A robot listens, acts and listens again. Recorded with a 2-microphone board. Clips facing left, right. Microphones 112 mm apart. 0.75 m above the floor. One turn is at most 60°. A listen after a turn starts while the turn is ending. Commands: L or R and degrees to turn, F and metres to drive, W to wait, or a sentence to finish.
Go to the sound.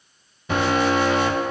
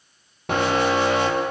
R60
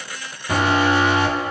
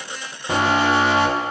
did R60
R30
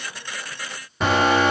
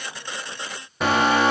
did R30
F1.0
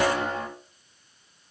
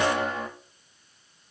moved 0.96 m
F1.0
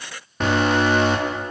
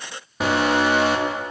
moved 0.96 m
F1.0
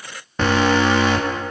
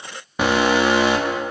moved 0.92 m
R15
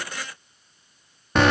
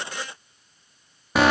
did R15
F1.0
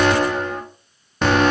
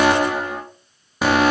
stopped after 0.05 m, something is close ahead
R10
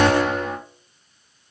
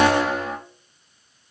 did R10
I am next to the alarm.